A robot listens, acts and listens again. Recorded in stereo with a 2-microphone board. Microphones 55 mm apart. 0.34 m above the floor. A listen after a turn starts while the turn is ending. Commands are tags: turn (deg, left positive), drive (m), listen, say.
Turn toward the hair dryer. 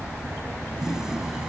<listen/>
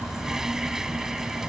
<listen/>
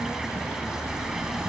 <say>I can't make out a hair dryer to turn to.</say>